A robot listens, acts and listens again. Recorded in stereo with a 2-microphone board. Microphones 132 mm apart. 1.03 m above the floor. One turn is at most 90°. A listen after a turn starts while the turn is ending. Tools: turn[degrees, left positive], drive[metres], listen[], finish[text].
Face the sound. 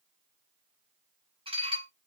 Thought: The dishes clattering: about 45° right or 135° right.
Action: turn[-45]
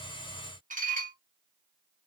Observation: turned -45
Thought: So it is at 90° right.
Action: turn[-90]
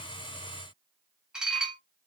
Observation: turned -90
Action: finish[Found it: dishes clattering, straight ahead.]